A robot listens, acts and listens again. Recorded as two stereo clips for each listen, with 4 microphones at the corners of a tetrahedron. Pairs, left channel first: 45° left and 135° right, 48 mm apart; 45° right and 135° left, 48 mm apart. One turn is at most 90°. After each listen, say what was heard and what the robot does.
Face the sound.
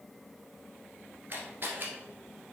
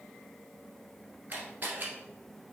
The camera shutter: 175° right. Turn 90° right.
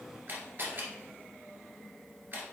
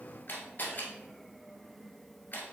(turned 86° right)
The camera shutter is now 90° right. Turn 90° right.
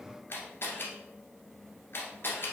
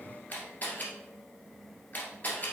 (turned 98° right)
The camera shutter is now 10° left. Turn 10° left.
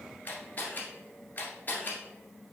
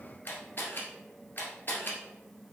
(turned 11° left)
Found it: a camera shutter, straight ahead.